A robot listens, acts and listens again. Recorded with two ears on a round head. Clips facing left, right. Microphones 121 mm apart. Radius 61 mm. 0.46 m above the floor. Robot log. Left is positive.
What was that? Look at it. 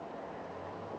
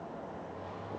cmd idle
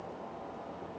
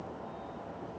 cmd idle
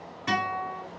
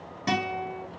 note: The guitar: about 45° right or 135° right.
cmd yaw -45
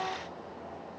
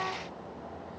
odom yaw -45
cmd idle
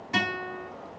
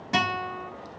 note: So it is at 80° right.
cmd yaw -80
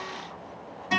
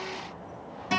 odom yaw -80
note: The guitar is now 30° right.
cmd yaw -30
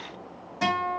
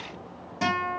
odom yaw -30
note: The guitar is now 15° right.
cmd yaw -15
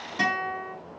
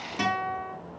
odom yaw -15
end: Facing the guitar, 2 to 4 m away.